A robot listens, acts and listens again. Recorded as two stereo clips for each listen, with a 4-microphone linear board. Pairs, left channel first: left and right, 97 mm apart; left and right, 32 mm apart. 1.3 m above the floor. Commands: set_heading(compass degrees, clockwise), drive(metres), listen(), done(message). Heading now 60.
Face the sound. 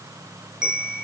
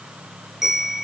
set_heading(90)
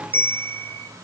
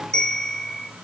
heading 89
set_heading(64)
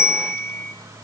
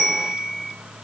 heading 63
done("Facing the bell, over 4 m away.")